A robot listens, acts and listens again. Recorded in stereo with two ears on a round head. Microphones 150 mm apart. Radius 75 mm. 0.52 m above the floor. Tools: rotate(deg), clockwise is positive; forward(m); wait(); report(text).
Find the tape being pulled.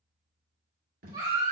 rotate(55)
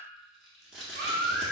report("Facing the tape being pulled.")